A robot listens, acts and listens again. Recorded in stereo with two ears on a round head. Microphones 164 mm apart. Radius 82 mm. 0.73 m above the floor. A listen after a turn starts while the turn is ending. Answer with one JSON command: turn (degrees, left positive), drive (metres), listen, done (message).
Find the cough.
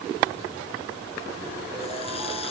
{"listen": true}
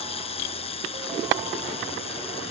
{"listen": true}
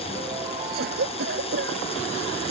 {"turn": -60}
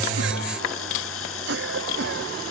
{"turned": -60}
{"turn": -65}
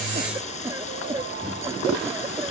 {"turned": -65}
{"turn": -15}
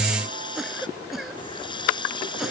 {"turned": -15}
{"done": "Facing the cough."}